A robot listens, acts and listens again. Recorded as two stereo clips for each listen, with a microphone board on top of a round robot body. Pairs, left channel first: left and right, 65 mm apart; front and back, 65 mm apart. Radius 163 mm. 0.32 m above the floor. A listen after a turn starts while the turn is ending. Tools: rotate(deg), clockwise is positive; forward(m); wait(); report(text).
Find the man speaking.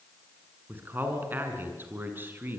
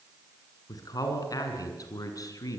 rotate(30)
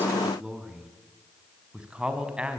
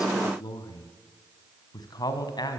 rotate(15)
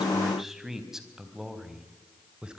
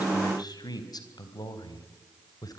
rotate(15)
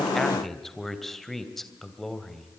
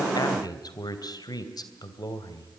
report("Found it: a man speaking, straight ahead, 2 to 4 m away.")